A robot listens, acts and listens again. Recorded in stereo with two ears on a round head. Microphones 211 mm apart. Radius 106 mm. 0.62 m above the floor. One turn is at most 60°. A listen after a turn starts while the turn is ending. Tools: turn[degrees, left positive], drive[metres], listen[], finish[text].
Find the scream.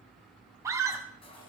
Action: turn[-30]
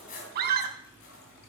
Thought: So it is at 135° right.
Action: turn[-60]
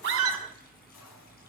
Thought: Nothing new. It was at 75° right.
Action: turn[-60]
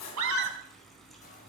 Thought: The scream is now 50° right.
Action: turn[-50]
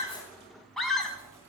Action: finish[Facing the scream.]